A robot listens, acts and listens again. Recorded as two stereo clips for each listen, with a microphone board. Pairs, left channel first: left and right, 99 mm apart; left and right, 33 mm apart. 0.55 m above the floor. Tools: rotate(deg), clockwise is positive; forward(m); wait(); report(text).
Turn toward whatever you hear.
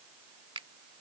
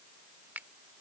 rotate(65)
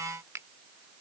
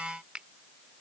rotate(35)
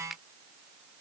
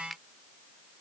report("Found it: a finger snap, straight ahead.")